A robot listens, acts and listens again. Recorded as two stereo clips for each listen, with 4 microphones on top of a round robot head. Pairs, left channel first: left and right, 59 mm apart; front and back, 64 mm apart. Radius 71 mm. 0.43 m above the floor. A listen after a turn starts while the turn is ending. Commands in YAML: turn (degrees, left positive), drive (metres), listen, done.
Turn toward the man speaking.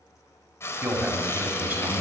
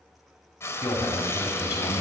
turn: -30
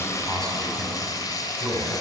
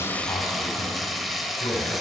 done: "Facing the man speaking, over 4 m away."